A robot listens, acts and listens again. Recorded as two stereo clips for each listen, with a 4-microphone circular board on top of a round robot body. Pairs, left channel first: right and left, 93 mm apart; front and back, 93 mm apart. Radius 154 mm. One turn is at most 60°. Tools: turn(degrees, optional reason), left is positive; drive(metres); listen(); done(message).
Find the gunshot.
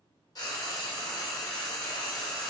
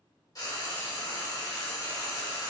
listen()
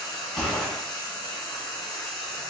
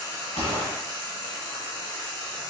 turn(degrees=-10, reason="The gunshot: 10° right.")
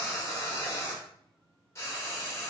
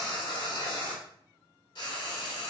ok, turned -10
done("Facing where the gunshot came from. I can't hear it now.")